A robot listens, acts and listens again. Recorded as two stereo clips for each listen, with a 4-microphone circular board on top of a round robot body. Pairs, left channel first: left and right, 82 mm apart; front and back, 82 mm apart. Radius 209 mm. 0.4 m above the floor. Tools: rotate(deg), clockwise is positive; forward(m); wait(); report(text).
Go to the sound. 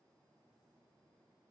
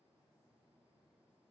wait()
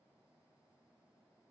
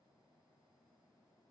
wait()
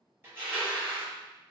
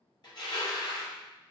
rotate(25)
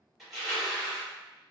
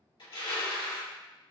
forward(1.0)
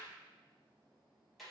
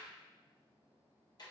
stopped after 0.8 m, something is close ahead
wait()
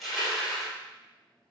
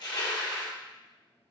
report("I am next to the crushing.")